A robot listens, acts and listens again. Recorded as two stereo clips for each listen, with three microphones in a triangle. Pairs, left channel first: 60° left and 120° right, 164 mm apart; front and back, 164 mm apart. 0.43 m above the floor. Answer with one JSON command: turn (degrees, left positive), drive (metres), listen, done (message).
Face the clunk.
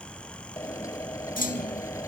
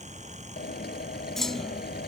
{"turn": 85}
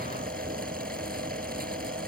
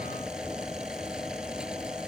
{"done": "I heard a clunk from this way, but can't make it out now."}